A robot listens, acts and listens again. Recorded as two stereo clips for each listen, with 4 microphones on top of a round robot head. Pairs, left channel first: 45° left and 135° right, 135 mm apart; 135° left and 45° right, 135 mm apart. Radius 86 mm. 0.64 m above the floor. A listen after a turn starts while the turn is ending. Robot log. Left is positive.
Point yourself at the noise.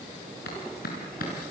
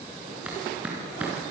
note: The clap: 35° left.
cmd yaw +35
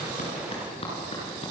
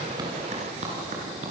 end: Facing the clap, over 4 m away.